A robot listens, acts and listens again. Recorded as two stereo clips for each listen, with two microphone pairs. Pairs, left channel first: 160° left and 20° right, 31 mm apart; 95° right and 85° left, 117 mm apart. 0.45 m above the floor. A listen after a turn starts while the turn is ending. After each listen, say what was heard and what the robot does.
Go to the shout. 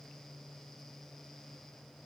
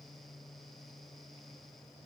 Keep listening.
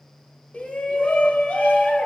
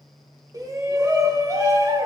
The shout: 140° left. Turn 140° left.
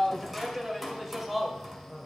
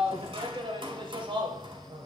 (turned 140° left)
The shout is now 55° left. Turn 55° left.
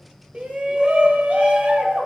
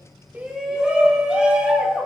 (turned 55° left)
Drive 1.0 m forward.
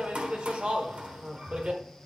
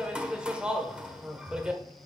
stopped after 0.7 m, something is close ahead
The shout is now 10° left. Turn 10° left.
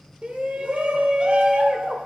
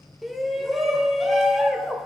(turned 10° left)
I am next to the shout.